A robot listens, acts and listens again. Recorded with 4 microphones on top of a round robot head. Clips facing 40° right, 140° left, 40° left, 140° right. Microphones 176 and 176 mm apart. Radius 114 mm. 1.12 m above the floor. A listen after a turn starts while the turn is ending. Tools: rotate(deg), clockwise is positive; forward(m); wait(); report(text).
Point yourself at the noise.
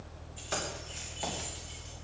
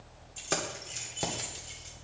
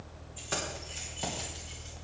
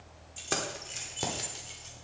rotate(-180)
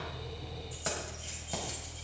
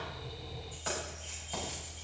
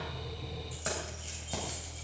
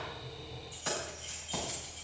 report("Found it: keys jangling, straight ahead.")